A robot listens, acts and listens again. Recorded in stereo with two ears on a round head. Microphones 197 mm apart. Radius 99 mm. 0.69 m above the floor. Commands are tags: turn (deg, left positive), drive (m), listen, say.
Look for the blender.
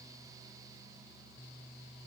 <listen/>
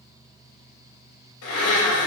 <turn deg="70"/>
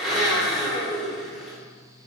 <say>Facing the blender, 1 to 2 m away.</say>